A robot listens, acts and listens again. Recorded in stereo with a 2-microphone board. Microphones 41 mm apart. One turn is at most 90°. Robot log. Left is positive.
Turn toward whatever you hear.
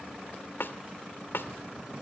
note: The snare drum: about 70° left or 110° left.
cmd yaw +70
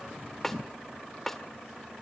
note: So it is at 10° left.
cmd yaw +10
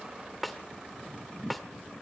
end: Found it: a snare drum, straight ahead.